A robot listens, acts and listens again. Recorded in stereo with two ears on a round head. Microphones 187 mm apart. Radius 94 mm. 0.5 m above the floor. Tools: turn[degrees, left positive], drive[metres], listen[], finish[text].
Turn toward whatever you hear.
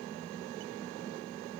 Action: listen[]
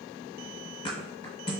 Thought: The thud: about 25° left or 155° left.
Action: turn[25]
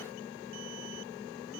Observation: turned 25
Action: listen[]
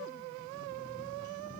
Action: finish[I heard a thud, but can't make it out now. It was about straight ahead or 130° left.]